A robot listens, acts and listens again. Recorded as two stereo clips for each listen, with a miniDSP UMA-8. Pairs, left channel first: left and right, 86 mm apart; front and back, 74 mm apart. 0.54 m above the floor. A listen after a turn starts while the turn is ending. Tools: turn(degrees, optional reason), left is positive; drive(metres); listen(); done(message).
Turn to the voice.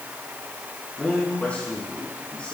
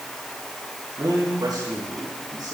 turn(degrees=165, reason="The man speaking: 165° left.")
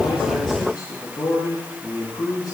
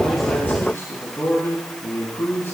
turn(degrees=55, reason="The man speaking is now 55° left.")
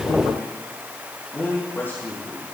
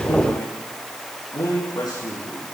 turn(degrees=30, reason="The man speaking is now 30° left.")
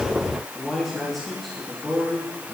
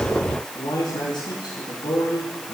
done("Facing the man speaking.")